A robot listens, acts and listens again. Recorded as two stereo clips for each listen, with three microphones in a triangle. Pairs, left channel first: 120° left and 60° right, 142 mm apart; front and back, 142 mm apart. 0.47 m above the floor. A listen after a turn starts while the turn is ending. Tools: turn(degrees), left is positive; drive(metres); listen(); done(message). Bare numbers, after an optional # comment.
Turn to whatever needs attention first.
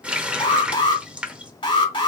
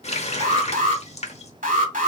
# The alarm: 170° left.
turn(170)
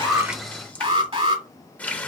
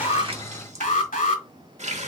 # The alarm is now 15° right.
turn(-15)
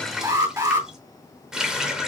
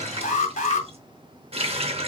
done("Facing the alarm, 1 to 2 m away.")